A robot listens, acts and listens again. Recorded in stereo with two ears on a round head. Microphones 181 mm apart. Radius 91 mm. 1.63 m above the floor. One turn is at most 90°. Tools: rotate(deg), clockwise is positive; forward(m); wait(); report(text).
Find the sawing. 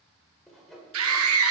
rotate(-30)
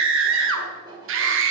rotate(25)
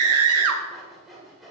report("Facing the sawing.")